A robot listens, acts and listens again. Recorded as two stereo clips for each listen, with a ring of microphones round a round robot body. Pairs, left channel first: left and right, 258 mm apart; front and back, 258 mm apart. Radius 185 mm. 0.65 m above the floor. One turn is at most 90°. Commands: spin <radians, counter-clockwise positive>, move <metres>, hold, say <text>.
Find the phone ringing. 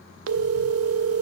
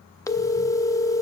spin -1.31
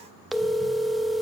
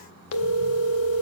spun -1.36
say Facing the phone ringing.